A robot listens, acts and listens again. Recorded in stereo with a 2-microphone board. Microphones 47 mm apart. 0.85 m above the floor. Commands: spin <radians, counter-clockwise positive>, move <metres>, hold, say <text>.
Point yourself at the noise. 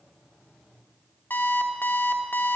spin 0.70
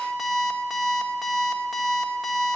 say Facing the alarm clock, 1 to 2 m away.